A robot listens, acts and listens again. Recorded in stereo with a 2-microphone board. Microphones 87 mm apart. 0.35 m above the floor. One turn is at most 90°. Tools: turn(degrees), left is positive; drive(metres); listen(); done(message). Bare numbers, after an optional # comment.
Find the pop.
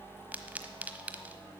# The pop: about 15° right or 165° right.
turn(-15)
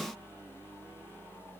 listen()
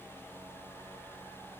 done("I heard a pop, but can't make it out now. It was about straight ahead or 150° right.")